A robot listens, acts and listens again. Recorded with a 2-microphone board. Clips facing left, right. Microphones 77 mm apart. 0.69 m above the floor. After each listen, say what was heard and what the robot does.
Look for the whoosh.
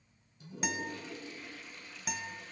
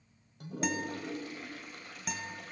Keep listening.
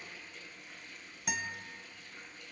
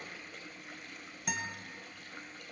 Keep listening.
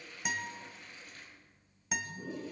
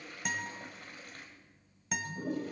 I can't make out a whoosh to turn to.